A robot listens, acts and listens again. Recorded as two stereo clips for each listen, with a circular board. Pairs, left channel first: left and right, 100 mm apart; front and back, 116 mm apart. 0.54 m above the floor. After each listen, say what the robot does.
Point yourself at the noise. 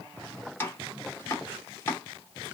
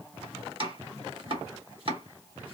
Turn 155° left.
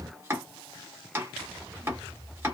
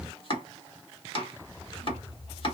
Turn 25° right.
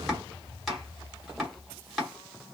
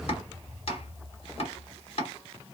Found it: chopping, straight ahead, 1 to 2 m away.